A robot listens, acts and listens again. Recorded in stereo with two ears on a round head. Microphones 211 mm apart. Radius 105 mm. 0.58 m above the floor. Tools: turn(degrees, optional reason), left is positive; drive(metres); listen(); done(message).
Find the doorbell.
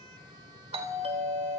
turn(degrees=-25, reason="The doorbell: about 25° right or 155° right.")
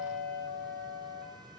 turn(degrees=-125, reason="So it is at 125° right.")
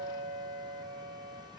turn(degrees=-40, reason="The doorbell is now 40° right.")
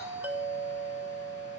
turn(degrees=-10, reason="The doorbell is now 10° right.")
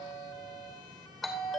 done("Facing the doorbell.")